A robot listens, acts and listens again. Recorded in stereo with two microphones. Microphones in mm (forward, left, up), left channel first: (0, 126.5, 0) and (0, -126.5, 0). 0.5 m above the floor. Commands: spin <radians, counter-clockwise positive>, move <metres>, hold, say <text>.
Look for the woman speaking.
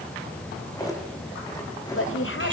spin 0.96
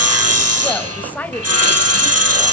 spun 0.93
say Found it: a woman speaking, straight ahead.